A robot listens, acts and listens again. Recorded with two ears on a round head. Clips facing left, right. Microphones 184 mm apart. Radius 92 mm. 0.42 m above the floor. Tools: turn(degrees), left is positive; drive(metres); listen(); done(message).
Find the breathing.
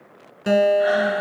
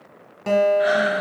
turn(degrees=-30)
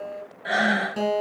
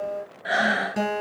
done("Facing the breathing, 1 to 2 m away.")